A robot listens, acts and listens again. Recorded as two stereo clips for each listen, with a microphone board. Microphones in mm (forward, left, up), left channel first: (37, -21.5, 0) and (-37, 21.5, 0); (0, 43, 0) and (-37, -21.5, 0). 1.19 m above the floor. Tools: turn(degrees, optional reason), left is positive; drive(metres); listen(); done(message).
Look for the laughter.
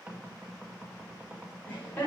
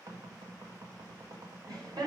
turn(degrees=-100, reason="The laughter: 100° right.")
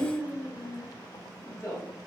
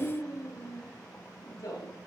turn(degrees=15, reason="The laughter is now 15° left.")
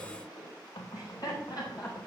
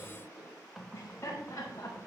done("Facing the laughter.")